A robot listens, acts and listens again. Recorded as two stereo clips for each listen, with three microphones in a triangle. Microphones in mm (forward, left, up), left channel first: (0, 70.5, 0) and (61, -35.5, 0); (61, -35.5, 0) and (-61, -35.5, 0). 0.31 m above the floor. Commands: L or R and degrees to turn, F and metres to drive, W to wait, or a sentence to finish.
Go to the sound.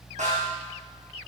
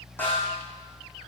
R75
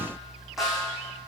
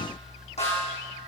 L30
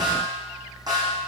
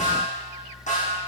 F1.0
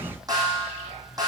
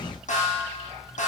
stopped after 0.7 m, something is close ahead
Blocked. The snare drum is further on, straight ahead.